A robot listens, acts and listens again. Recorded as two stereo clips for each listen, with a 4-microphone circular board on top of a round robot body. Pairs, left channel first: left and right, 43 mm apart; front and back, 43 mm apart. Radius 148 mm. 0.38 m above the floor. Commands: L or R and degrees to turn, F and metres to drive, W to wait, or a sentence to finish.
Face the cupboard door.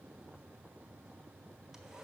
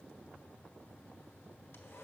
W
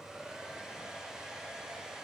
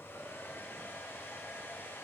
W
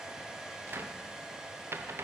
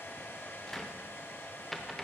R80
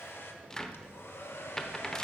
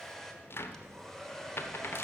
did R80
L15
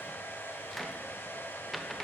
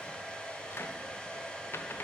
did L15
Found it: a cupboard door, straight ahead.